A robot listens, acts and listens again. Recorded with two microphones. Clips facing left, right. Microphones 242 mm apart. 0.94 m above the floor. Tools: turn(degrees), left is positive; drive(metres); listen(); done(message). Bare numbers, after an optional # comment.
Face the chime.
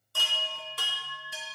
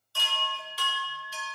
# The chime: about 55° left or 125° left.
turn(55)
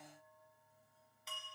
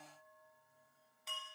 done("Found it: a chime, straight ahead.")